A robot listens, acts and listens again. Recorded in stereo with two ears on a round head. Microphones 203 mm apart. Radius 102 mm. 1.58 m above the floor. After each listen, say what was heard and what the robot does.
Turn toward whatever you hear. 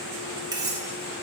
The cutlery clinking: about 20° right or 160° right. Turn 20° right.
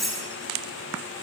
Facing the cutlery clinking, 2 to 4 m away.